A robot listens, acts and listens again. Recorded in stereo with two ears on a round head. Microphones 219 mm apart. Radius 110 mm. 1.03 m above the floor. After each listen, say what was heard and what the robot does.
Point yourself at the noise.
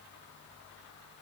Keep listening.
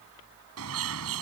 The bird: about 65° right or 115° right. Turn 65° right.
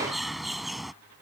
Found it: a bird, straight ahead.